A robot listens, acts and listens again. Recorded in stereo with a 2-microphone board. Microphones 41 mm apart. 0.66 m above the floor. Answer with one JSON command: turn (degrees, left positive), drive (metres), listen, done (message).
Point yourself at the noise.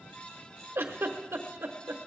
{"turn": -70}
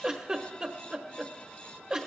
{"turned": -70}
{"turn": -20}
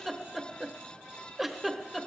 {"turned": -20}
{"done": "Found it: a giggle, straight ahead."}